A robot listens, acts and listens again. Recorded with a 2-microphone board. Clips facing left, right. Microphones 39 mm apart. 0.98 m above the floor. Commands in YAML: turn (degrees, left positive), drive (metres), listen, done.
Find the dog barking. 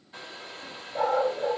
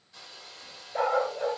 turn: -45
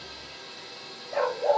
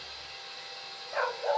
done: "Facing the dog barking, 2 to 4 m away."